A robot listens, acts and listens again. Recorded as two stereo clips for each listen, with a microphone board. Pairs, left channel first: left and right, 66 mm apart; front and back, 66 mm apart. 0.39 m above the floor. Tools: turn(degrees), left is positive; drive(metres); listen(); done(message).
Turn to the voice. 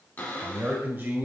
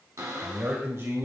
turn(degrees=-145)
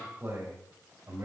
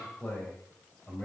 turn(degrees=-70)
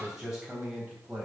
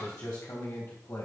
turn(degrees=-20)
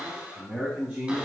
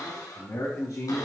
turn(degrees=-10)
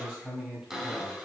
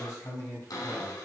done("Facing the man speaking.")